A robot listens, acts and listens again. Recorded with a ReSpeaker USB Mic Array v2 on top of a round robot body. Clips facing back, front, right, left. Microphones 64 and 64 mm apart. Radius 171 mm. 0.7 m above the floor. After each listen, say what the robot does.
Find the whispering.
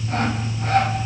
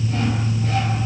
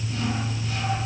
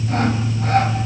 Keep listening.
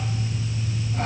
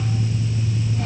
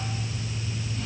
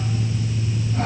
Keep listening.
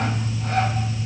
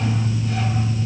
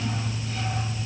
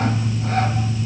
I can't make out whispering to turn to.